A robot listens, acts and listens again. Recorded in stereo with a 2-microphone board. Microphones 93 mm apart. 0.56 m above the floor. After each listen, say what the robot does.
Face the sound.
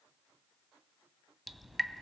Turn 30° left.
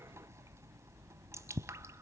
Turn 30° right.
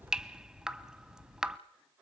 Facing the dripping, under 1 m away.